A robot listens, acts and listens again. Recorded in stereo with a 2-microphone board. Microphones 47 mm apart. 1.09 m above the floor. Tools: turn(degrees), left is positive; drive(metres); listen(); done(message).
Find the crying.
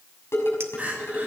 turn(degrees=-35)
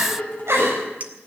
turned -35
turn(degrees=-110)
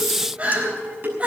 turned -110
turn(degrees=-30)
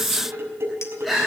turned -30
done("Facing the crying, over 4 m away.")